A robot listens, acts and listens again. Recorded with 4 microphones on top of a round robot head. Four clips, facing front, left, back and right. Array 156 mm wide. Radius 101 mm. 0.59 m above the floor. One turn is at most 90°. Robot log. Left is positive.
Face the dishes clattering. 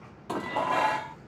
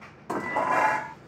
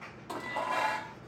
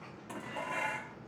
note: The dishes clattering: 65° left.
cmd yaw +65
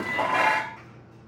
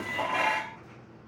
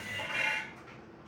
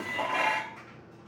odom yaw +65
end: Found it: dishes clattering, straight ahead.